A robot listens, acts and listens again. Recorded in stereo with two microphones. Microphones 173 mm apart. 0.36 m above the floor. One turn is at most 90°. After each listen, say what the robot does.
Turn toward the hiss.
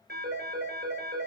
Keep listening.
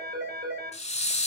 Turn 40° left.
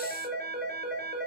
Keep listening.
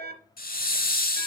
Turn 90° left.
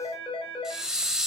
Found it: a hiss, straight ahead, 1 to 2 m away.